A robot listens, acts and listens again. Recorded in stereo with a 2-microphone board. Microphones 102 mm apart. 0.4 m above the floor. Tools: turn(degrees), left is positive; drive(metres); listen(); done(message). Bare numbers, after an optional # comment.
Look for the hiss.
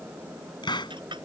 # The hiss: about 50° left or 130° left.
turn(50)
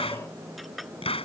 # So it is at 75° left.
turn(75)
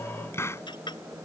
# The hiss is now 25° left.
turn(25)
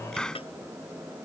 done("Found it: a hiss, straight ahead.")